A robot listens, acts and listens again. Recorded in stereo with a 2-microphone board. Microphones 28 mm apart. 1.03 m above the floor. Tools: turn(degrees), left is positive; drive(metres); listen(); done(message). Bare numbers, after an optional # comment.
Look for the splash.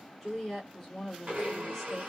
listen()
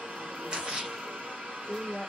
# The splash: about 30° right or 150° right.
turn(-30)
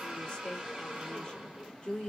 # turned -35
listen()
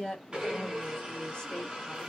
done("I heard a splash, but can't make it out now. It was about 5° left or 115° right.")